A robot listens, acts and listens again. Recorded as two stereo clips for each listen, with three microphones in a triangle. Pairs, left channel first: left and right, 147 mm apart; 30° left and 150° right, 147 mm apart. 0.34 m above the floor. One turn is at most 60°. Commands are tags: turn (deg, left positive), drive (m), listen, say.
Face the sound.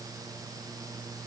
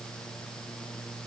<listen/>
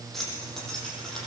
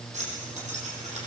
<turn deg="60"/>
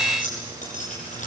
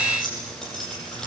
<turn deg="60"/>
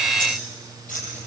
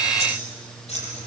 <turn deg="60"/>
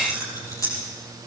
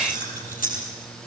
<turn deg="20"/>
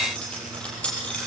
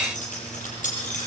<say>Found it: keys jangling, straight ahead, over 4 m away.</say>